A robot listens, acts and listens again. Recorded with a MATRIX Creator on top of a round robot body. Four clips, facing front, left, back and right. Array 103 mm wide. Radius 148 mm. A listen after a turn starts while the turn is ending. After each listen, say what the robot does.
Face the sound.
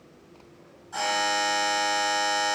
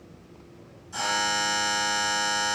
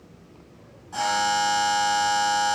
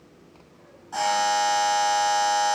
Turn 95° right.
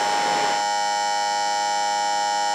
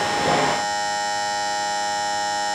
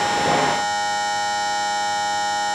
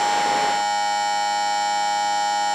Turn 10° left.
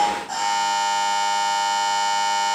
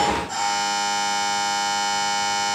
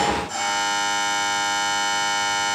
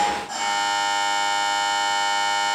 Facing the buzzer, 1 to 2 m away.